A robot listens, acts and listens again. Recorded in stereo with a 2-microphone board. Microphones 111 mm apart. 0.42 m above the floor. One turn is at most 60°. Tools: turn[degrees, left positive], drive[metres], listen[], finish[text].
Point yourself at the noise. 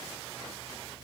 Action: listen[]
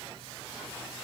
Action: listen[]
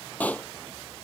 Action: turn[30]
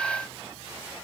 Action: listen[]
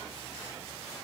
Action: finish[I heard a pop, but can't make it out now. It was about 15° right or 135° left.]